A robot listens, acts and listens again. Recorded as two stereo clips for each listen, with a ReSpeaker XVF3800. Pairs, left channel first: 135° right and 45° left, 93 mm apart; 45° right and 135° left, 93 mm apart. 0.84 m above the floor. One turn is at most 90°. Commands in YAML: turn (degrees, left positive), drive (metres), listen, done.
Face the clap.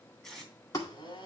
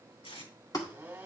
turn: -90
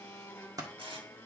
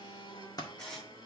done: "Found it: a clap, straight ahead, 1 to 2 m away."